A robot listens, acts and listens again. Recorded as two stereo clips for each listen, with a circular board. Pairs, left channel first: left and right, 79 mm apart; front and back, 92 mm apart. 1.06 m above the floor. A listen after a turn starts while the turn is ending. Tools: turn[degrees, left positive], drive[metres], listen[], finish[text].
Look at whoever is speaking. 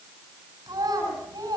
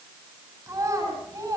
Thought: The child speaking: 125° right.
Action: turn[-125]
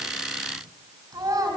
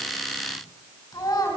Thought: The child speaking is now 50° right.
Action: turn[-50]
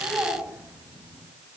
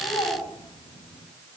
Thought: The child speaking is now 20° right.
Action: turn[-20]
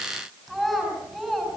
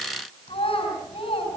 Action: finish[Found it: a child speaking, straight ahead, over 4 m away.]